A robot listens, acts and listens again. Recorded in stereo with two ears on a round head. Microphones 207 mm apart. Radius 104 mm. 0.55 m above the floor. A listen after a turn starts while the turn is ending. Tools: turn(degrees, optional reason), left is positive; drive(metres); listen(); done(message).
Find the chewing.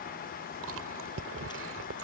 turn(degrees=-65, reason="The chewing: about 65° right or 115° right.")
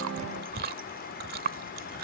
turn(degrees=-45, reason="So it is at 45° right.")
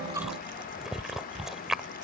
done("Facing the chewing.")